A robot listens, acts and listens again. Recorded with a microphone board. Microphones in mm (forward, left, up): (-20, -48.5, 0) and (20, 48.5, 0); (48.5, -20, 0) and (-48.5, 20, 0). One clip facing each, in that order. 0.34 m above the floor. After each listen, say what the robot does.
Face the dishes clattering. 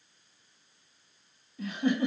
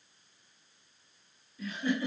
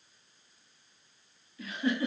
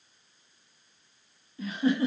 Keep listening.
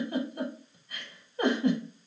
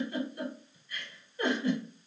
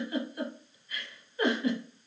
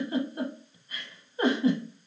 Keep listening.
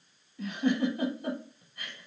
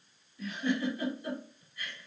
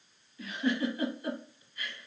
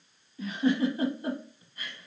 I can't make out dishes clattering, only a giggle.